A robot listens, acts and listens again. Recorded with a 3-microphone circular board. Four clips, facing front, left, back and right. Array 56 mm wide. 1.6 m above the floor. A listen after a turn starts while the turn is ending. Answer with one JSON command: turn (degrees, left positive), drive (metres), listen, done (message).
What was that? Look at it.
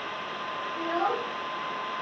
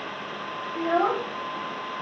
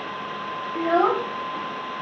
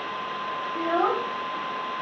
{"turn": -170}
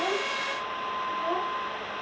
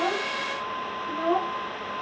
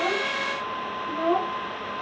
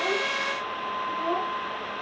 {"turn": 155}
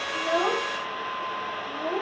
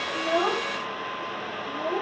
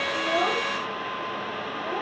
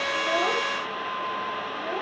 {"turn": 40}
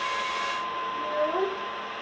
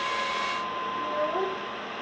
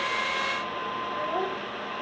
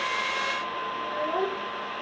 {"done": "Facing the child speaking, 2 to 4 m away."}